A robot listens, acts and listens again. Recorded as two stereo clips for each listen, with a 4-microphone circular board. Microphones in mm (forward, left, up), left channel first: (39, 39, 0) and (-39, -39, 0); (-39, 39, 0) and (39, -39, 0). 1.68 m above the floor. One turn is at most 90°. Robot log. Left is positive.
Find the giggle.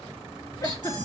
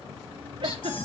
note: The giggle: 10° right.
cmd yaw -10
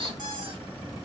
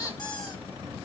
cmd idle
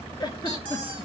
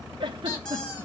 end: Found it: a giggle, straight ahead, 1 to 2 m away.